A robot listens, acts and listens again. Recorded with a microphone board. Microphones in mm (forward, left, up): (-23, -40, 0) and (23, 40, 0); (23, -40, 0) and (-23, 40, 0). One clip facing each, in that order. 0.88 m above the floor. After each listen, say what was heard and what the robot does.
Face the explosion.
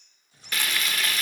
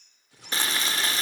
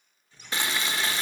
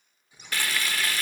The explosion: 45° left. Turn 45° left.
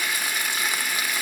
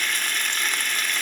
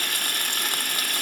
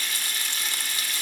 Facing where the explosion came from. I can't hear it now.